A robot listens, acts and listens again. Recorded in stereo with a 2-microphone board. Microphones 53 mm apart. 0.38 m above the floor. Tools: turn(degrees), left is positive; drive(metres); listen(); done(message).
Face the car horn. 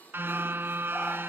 turn(degrees=-45)
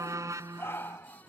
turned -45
turn(degrees=-90)
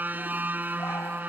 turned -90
turn(degrees=-35)
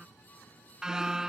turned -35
turn(degrees=-10)
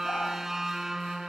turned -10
done("Facing the car horn.")